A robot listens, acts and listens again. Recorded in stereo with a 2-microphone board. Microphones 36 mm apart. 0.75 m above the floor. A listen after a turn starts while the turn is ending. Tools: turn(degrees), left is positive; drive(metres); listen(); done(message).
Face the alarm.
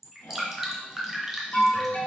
turn(degrees=35)
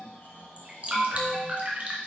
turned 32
done("Found it: an alarm, straight ahead.")